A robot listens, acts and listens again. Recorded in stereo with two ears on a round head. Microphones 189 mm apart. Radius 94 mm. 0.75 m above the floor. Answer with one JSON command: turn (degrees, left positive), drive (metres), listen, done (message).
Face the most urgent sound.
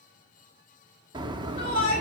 {"turn": 25}
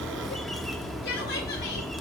{"listen": true}
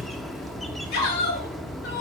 {"turn": 130}
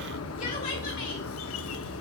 {"listen": true}
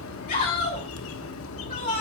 {"turn": 45}
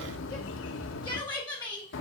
{"turn": 20}
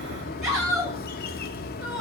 {"done": "Found it: a shout, straight ahead, over 4 m away."}